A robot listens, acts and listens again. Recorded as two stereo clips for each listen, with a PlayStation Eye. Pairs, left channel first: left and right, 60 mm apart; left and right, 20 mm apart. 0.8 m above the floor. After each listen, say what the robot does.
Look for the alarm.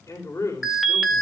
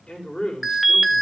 Turn 30° left.
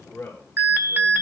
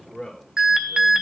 Turn 35° right.
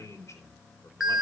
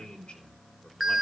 Facing the alarm, 1 to 2 m away.